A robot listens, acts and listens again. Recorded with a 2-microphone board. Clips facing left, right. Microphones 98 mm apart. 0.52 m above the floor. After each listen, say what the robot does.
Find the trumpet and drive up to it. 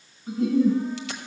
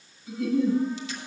Keep listening.
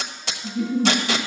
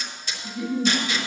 Keep listening.
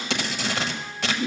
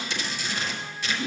I can't make out a trumpet to turn to.